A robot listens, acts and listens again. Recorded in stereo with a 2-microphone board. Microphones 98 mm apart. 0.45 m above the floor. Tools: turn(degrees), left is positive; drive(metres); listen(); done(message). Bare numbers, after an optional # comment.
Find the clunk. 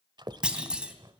turn(-30)
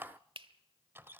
listen()
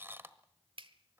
done("I heard a clunk, but can't make it out now. It was about 20° left or 140° right.")